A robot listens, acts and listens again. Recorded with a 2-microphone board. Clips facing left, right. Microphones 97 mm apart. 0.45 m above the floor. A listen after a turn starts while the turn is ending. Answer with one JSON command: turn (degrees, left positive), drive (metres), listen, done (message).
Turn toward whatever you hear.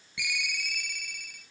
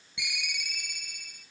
{"turn": -20}
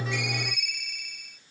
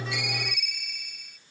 {"done": "Facing the ringtone, 2 to 4 m away."}